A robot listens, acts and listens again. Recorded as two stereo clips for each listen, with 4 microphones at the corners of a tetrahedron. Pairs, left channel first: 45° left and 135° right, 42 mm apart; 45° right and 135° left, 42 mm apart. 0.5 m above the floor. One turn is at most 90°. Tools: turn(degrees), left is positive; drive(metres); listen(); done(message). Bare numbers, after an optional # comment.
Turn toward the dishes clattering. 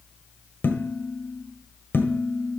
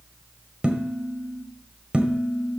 # The dishes clattering: 70° left.
turn(70)
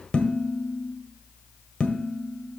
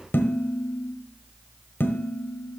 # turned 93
# The dishes clattering is now 25° right.
turn(-25)
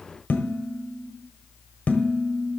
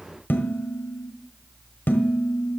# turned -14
# The dishes clattering is now 10° right.
turn(-10)
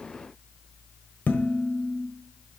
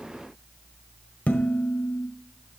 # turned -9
done("Found it: dishes clattering, straight ahead.")